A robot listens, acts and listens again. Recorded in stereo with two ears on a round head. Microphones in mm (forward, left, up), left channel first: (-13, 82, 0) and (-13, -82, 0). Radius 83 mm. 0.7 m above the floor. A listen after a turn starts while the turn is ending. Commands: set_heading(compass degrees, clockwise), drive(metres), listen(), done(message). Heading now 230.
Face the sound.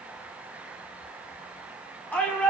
set_heading(200)
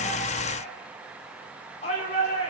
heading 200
set_heading(60)
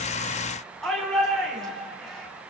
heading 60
done("Facing the shout, over 4 m away.")